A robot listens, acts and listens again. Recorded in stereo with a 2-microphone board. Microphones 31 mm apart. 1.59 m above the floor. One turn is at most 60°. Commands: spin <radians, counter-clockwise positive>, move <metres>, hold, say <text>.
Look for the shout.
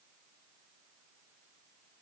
hold
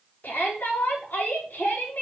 spin 1.05
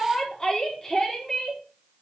spin 0.26
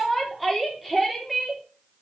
say Found it: a shout, straight ahead, over 4 m away.